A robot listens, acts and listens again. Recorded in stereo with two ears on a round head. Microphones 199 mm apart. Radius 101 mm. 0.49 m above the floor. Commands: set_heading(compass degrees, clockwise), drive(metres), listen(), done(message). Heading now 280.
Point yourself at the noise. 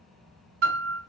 set_heading(335)
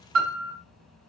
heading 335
set_heading(45)
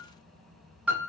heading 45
done("Found it: a piano, straight ahead.")